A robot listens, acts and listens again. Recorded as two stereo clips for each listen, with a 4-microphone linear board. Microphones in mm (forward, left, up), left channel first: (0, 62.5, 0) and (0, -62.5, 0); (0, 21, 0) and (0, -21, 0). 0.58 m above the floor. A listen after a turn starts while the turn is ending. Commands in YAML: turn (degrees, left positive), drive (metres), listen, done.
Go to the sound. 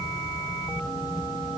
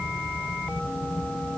listen: true
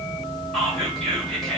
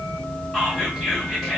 turn: 30
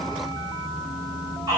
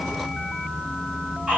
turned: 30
turn: -25
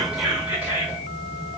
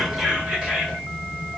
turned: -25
turn: -15
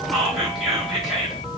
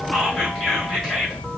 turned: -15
drive: 1.0
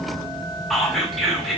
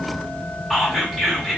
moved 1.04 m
drive: 1.0
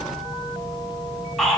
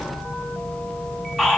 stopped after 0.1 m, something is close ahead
done: "I am next to the whispering."